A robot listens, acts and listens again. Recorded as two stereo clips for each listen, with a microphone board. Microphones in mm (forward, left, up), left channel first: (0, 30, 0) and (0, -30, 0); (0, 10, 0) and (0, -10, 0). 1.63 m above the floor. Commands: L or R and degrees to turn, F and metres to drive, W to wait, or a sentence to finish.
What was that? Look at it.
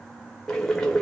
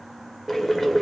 L30
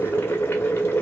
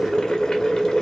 L140
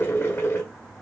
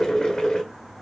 L50
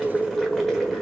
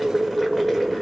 Found it: boiling, straight ahead, 1 to 2 m away.